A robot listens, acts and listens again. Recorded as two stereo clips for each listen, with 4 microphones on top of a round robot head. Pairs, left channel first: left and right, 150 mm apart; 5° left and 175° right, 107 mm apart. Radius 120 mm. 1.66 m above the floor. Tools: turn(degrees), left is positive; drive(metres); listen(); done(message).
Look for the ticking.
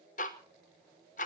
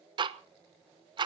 turn(degrees=140)
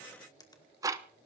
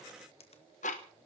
turn(degrees=-25)
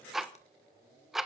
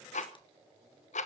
done("Facing the ticking.")